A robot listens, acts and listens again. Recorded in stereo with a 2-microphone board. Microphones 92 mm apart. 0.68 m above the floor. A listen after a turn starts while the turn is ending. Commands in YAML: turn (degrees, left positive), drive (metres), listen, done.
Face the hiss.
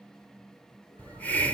turn: 15
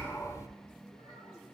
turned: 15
turn: 150
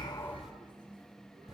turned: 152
listen: true
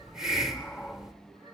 done: "Facing the hiss, 1 to 2 m away."